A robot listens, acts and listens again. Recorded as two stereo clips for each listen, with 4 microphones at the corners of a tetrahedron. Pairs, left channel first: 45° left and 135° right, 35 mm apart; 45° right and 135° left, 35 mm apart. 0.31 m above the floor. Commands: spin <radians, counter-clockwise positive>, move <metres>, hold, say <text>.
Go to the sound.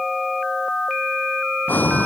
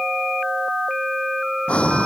spin 0.17
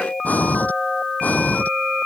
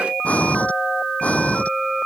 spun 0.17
move 1.0
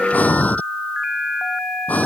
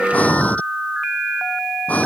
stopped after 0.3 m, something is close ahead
say Something is in my way. I am facing the breathing but have not reached it.